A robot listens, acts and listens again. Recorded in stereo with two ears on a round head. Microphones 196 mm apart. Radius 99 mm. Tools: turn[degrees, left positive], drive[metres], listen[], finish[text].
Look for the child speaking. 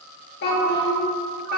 Thought: The child speaking: about 45° left or 135° left.
Action: turn[45]
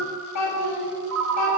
Thought: So it is at 85° left.
Action: turn[85]
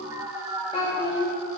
Thought: The child speaking is now 20° left.
Action: turn[20]
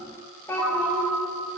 Thought: The child speaking is now 10° left.
Action: turn[10]
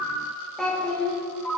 Action: finish[Facing the child speaking, 1 to 2 m away.]